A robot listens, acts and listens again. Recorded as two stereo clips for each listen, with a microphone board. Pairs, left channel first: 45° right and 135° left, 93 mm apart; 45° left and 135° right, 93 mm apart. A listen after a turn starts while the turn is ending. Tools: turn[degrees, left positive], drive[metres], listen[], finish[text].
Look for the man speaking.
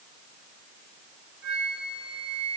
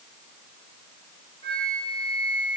Action: listen[]
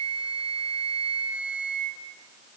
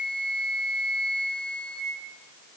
Action: listen[]
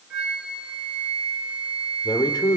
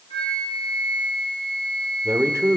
Thought: The man speaking: 75° right.
Action: turn[-75]
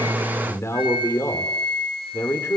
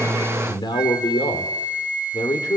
Thought: The man speaking is now 15° left.
Action: turn[15]
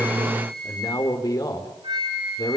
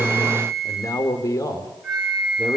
Action: finish[Found it: a man speaking, straight ahead, 2 to 4 m away.]